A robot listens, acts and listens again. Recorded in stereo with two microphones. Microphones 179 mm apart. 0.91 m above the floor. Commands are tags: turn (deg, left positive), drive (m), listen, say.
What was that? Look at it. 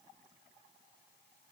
<listen/>
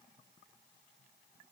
<listen/>
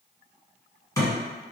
<turn deg="20"/>
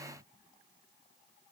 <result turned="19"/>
<listen/>
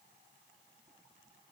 <say>I heard a thud, but can't make it out now. It was about straight ahead or 145° left.</say>